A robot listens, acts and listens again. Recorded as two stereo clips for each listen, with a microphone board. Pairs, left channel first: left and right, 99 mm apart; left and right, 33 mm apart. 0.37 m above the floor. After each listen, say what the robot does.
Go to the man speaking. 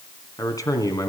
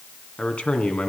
Turn 35° left.
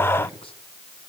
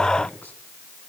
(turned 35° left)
Keep listening.
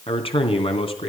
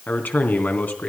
Turn 110° left.
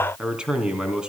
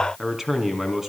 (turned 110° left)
Turn 10° right.
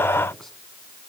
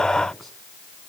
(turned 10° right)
Keep listening.
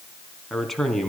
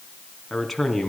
Drive 1.0 m forward.
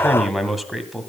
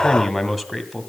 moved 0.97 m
Drive 1.0 m forward.
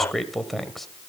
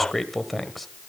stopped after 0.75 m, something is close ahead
Arrived at the man speaking, straight ahead.